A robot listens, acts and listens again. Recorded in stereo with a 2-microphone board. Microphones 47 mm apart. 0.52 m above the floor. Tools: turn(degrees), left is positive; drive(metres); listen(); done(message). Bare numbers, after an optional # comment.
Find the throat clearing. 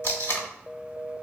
listen()
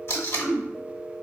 # The throat clearing: about 40° left or 140° left.
turn(40)
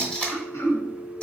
# So it is at 95° left.
turn(95)
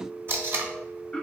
# The throat clearing is now 20° left.
turn(20)
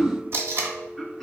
done("Found it: throat clearing, straight ahead, under 1 m away.")